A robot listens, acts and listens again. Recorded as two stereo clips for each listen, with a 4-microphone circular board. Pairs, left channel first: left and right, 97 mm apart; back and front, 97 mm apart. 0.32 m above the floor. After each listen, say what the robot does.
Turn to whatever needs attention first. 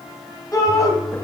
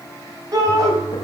Turn 40° left.
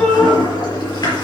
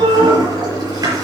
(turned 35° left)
Turn 10° left.
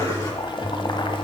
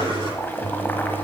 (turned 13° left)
Keep listening.
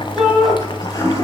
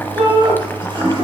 Facing the shout, 2 to 4 m away.